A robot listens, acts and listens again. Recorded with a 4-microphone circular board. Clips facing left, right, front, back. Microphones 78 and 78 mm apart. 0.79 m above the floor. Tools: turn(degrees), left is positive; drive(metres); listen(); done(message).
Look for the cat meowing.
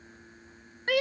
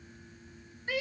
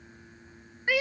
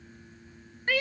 listen()
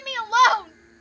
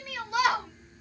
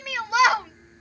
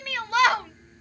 listen()
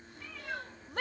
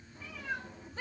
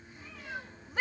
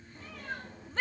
turn(degrees=-170)
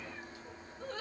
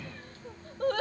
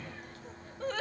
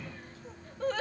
listen()
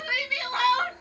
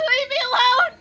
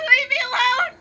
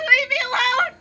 listen()
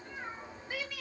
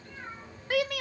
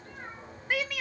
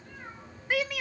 turn(degrees=20)
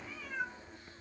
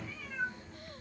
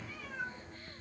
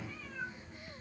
done("Facing the cat meowing, 2 to 4 m away.")